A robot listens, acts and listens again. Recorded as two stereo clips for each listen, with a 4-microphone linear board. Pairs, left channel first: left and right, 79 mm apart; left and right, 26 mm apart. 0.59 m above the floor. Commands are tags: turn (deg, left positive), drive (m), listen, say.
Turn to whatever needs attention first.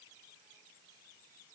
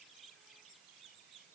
<listen/>
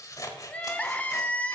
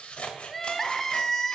<turn deg="15"/>
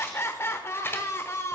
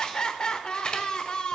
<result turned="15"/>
<turn deg="150"/>
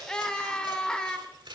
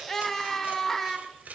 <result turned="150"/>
<turn deg="10"/>
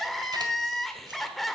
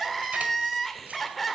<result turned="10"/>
<say>Facing the crying, under 1 m away.</say>